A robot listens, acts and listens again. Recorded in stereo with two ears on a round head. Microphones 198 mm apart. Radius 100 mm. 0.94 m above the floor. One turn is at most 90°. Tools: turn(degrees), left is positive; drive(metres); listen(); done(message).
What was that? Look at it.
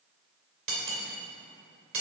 turn(degrees=-60)
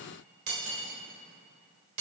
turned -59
turn(degrees=-60)
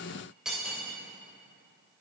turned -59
done("Facing the cutlery clinking.")